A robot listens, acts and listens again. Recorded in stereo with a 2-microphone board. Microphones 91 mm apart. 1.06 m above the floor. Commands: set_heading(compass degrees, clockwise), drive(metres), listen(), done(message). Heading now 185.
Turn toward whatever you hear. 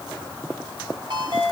set_heading(245)
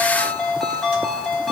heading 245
done("Facing the ringtone.")